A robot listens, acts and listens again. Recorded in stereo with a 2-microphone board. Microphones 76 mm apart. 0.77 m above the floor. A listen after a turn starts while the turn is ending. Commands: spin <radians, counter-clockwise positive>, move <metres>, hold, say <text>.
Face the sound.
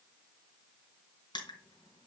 spin 1.57
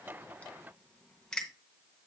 spin 0.17
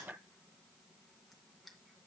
hold
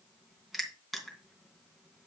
say Found it: crushing, straight ahead, 2 to 4 m away.